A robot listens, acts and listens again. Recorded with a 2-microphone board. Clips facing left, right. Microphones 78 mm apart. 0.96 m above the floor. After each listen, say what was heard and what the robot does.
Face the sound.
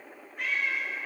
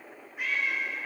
Turn 30° right.
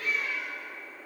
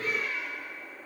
So it is at 145° right. Turn 145° right.
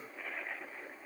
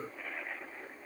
Keep listening.
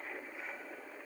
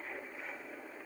Keep listening.
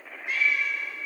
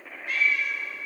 The cat meowing is now 25° left. Turn 25° left.
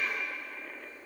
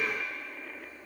The cat meowing is now 10° right. Turn 10° right.
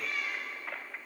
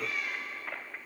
Found it: a cat meowing, straight ahead, 1 to 2 m away.